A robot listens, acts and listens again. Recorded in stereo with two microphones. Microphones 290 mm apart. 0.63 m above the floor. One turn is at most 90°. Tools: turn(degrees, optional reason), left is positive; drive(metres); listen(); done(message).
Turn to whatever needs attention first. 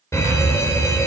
turn(degrees=30)
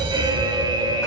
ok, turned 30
turn(degrees=-15, reason="So it is at 15° right.")
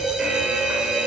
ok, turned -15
done("Facing the fire alarm, 2 to 4 m away.")